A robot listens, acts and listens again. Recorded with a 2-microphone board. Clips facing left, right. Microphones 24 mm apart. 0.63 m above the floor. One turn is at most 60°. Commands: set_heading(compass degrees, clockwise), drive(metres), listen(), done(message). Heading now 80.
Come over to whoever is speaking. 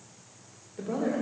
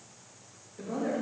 set_heading(40)
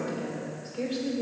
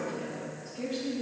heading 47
set_heading(347)
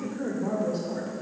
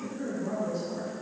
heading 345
set_heading(305)
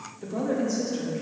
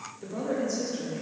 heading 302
drive(1.0)
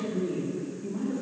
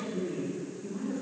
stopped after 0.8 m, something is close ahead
done("I am next to the woman speaking.")